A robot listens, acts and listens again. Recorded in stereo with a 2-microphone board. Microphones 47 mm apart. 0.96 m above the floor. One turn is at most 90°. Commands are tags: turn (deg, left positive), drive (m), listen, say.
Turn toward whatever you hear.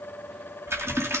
<turn deg="-75"/>
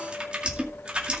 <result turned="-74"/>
<turn deg="-25"/>
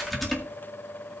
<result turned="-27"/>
<say>Facing the typing on a keyboard, 2 to 4 m away.</say>